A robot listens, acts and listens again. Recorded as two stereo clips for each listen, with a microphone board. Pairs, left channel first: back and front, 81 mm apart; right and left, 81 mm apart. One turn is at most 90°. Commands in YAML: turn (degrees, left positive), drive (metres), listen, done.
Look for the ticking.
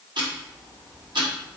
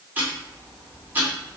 turn: 25
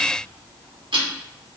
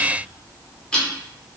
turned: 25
turn: -10
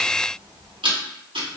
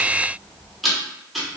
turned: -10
done: "Facing the ticking, under 1 m away."